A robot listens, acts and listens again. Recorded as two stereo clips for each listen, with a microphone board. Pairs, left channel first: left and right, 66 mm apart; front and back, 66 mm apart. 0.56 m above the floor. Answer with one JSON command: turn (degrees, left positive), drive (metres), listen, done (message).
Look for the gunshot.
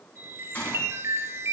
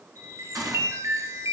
{"turn": 160}
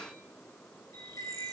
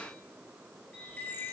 {"done": "I heard a gunshot from this way, but can't make it out now."}